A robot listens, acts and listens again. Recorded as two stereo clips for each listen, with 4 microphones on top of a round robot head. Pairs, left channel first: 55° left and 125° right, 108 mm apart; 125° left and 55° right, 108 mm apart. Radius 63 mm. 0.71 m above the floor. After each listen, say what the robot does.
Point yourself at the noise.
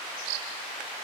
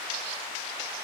Keep listening.
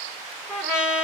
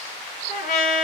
Turn 145° left.
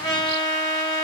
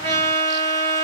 Facing the trumpet, 2 to 4 m away.